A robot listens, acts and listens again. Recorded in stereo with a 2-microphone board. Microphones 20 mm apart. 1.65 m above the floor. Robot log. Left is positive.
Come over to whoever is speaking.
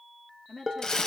note: The woman speaking: about 55° left or 125° left.
cmd yaw +55
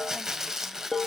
cmd idle
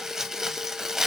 cmd idle
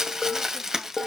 end: I heard a woman speaking, but can't make it out now. It was about straight ahead or 70° left. I did not reach it.